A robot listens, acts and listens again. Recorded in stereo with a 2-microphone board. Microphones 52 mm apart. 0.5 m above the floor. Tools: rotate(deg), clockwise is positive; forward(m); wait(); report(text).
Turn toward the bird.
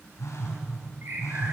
rotate(45)
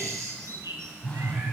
rotate(85)
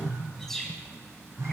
report("Facing the bird, 2 to 4 m away.")